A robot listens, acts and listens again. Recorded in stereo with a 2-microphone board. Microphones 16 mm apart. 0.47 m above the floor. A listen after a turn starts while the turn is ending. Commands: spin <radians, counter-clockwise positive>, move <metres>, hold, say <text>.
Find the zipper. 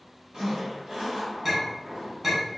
spin -1.05
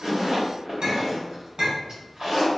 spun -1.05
spin -0.96
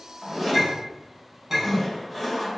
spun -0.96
say Found it: a zipper, straight ahead.